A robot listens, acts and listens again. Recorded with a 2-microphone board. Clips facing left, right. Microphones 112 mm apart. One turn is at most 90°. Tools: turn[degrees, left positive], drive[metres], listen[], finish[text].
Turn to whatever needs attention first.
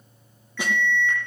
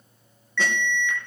Thought: The alarm: about 40° left or 140° left.
Action: turn[40]
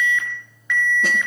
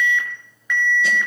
Action: finish[Facing the alarm, over 4 m away.]